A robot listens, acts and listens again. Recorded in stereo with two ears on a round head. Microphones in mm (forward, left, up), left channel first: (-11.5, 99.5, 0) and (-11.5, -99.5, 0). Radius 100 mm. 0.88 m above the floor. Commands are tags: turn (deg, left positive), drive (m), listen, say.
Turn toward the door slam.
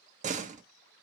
<turn deg="-35"/>
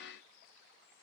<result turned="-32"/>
<listen/>
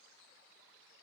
<say>I heard a door slam, but can't make it out now. It was about straight ahead or 115° right.</say>